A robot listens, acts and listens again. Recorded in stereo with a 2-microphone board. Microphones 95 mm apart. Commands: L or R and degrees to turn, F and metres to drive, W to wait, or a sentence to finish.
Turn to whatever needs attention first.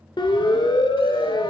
L55
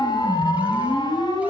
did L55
L65
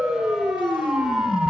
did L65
Found it: a siren, straight ahead.